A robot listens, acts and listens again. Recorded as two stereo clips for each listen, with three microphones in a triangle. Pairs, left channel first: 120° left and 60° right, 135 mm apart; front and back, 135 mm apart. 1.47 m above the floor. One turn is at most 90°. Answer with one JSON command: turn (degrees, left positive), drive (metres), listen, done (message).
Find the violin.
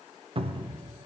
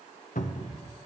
{"listen": true}
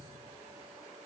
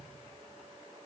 {"listen": true}
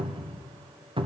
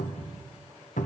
{"done": "I can't make out a violin to turn to."}